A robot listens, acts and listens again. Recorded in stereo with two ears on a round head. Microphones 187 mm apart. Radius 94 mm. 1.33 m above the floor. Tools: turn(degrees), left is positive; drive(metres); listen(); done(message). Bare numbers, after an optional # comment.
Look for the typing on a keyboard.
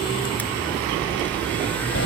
listen()
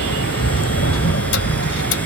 listen()
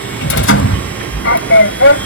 done("I can't make out typing on a keyboard to turn to.")